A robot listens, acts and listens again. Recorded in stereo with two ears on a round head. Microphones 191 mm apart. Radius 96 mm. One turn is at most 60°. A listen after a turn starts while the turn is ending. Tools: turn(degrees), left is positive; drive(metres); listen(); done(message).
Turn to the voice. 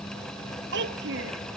turn(degrees=-55)
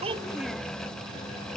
listen()
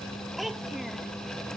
done("Facing the child speaking.")